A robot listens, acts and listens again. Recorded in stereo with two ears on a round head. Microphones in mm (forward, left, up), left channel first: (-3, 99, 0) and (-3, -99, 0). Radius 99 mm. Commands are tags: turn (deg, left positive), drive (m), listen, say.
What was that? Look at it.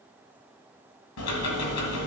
<turn deg="90"/>
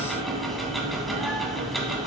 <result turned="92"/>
<say>Facing the ticking, 1 to 2 m away.</say>